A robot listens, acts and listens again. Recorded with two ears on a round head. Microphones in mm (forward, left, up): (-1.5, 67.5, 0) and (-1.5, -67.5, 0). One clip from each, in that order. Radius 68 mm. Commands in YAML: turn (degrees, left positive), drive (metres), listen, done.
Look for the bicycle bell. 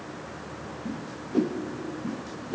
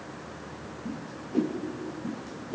listen: true
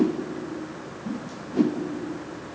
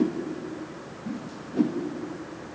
listen: true
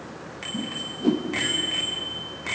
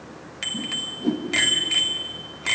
turn: -65
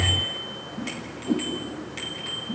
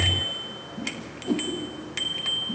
turn: -50
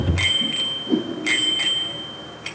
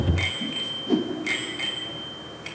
turn: 20
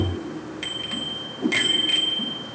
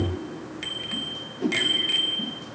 done: "Facing the bicycle bell."